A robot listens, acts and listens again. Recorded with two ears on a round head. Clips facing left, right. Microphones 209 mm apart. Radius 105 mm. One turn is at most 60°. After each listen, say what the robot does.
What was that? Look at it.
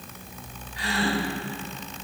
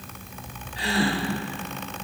Turn 30° right.
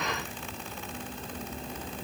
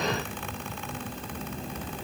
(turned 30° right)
Keep listening.
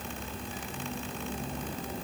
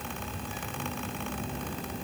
I heard a gasp, but can't make it out now. It was about straight ahead or 120° right.